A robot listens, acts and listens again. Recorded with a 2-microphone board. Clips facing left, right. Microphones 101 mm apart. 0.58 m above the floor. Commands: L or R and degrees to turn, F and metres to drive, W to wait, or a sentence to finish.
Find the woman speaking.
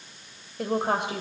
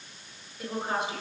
L60
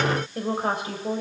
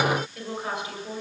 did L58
L40
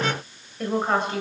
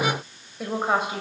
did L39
Found it: a woman speaking, straight ahead.